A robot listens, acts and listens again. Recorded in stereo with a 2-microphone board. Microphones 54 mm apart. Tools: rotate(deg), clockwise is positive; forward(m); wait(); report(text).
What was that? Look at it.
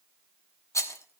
rotate(-90)
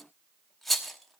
report("Found it: a rattle, straight ahead.")